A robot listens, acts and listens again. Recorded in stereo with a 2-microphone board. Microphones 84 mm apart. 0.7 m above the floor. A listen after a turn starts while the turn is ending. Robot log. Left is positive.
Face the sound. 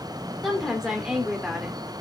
cmd yaw -30
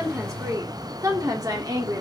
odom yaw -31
note: So it is at 130° right.
cmd yaw -130
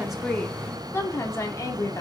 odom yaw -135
note: The woman speaking is now 40° left.
cmd yaw +40
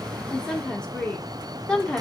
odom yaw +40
note: The woman speaking is now 10° left.
cmd yaw +10
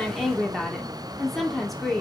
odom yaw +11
end: Facing the woman speaking.